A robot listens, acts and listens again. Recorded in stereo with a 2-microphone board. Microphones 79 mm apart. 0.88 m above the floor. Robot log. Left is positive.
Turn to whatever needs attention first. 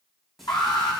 note: The alarm: about 75° left or 105° left.
cmd yaw +75
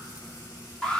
note: So it is at 10° left.
cmd yaw +10
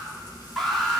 end: Facing the alarm, 2 to 4 m away.